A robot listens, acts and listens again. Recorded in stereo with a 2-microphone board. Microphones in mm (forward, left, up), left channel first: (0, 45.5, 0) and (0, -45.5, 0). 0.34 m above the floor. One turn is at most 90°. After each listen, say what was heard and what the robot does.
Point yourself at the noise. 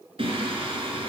Turn 90° right.
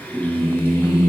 So it is at 30° left. Turn 30° left.
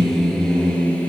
The singing is now 15° left. Turn 15° left.
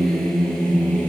The singing is now 10° left. Turn 10° left.
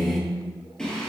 The singing is now 10° left. Turn 10° left.
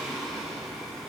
Facing the singing, 2 to 4 m away.